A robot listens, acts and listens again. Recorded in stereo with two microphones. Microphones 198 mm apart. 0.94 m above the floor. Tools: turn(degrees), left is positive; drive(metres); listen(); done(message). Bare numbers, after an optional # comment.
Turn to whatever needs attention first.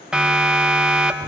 turn(-30)
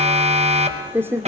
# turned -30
# So it is at 145° right.
turn(-145)
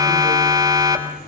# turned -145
# The siren is now 20° right.
turn(-20)
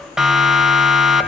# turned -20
done("Facing the siren.")